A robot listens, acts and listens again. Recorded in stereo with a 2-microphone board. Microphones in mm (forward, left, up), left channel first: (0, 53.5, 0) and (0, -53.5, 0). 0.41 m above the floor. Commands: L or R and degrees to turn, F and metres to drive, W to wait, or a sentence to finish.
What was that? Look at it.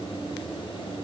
W
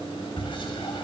L50
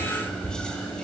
L10
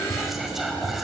Facing the whispering.